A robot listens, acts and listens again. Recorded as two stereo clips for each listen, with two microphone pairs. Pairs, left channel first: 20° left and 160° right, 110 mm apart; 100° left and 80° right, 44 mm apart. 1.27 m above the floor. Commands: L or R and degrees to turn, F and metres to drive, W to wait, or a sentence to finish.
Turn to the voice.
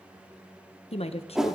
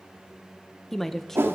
L20
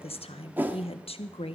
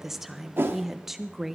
Facing the woman speaking, 1 to 2 m away.